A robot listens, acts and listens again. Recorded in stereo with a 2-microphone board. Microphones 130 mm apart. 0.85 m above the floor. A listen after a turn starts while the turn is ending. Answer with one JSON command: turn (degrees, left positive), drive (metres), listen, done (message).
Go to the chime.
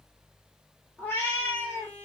{"listen": true}
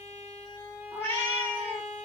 {"listen": true}
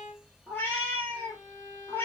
{"done": "I can't make out a chime to turn to."}